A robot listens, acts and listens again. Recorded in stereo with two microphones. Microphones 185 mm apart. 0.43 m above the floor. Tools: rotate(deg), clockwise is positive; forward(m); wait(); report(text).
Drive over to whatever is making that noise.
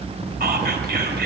rotate(55)
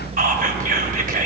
rotate(55)
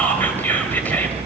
rotate(-10)
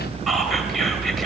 forward(1.0)
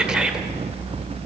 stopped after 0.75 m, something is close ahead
report("Arrived at the whispering, straight ahead.")